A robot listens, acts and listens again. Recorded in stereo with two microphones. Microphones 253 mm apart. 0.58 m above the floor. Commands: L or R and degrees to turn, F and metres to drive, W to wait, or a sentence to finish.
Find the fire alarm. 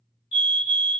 L45
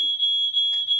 L80
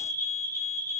L15
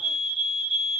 Facing the fire alarm, 2 to 4 m away.